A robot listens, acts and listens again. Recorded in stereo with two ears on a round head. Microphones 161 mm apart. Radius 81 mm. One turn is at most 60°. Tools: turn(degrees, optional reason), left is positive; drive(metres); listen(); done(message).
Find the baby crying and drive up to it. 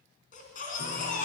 turn(degrees=45, reason="The baby crying: about 45° left or 135° left.")
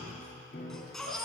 drive(metres=1.0)
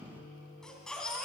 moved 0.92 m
drive(metres=1.0)
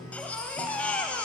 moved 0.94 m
turn(degrees=10, reason="The baby crying is now 10° left.")
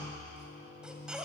drive(metres=1.0)
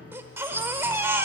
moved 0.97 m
turn(degrees=-15, reason="The baby crying is now 15° right.")
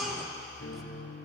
drive(metres=1.0)
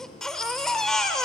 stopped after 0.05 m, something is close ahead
done("I am next to the baby crying.")